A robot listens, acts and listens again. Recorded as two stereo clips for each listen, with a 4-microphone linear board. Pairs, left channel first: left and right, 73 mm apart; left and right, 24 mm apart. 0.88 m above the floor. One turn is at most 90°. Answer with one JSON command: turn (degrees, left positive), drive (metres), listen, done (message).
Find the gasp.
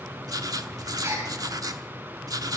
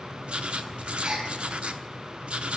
{"turn": -45}
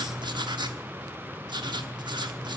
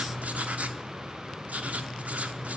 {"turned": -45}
{"listen": true}
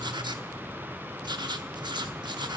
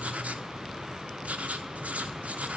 {"done": "I heard a gasp, but can't make it out now. It was about straight ahead or 90° right."}